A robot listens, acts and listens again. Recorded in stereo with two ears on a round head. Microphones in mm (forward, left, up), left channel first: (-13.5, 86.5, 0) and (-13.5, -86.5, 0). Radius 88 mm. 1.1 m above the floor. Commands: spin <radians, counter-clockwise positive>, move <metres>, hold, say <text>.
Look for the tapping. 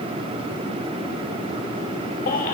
hold
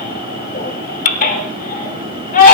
hold
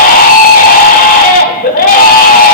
say I can't make out tapping to turn to.